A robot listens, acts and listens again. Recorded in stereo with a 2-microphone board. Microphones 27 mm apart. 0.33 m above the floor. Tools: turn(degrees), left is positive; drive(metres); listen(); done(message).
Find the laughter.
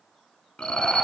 turn(degrees=45)
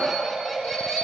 done("Found it: laughter, straight ahead, 2 to 4 m away.")